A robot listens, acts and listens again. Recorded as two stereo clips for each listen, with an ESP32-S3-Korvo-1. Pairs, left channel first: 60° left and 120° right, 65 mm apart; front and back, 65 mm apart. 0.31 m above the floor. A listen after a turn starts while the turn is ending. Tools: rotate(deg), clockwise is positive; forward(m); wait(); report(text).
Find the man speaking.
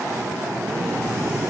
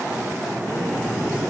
wait()
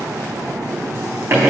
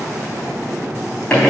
wait()
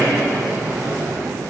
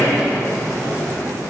report("I can't make out a man speaking to turn to.")